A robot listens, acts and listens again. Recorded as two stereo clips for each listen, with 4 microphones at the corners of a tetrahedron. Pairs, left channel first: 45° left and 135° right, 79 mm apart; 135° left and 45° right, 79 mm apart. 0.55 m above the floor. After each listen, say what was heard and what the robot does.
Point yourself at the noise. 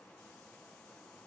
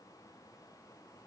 Keep listening.
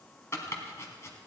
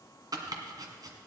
The chopping: 10° right. Turn 10° right.
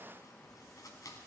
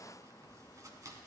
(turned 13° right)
Found it: chopping, straight ahead, 1 to 2 m away.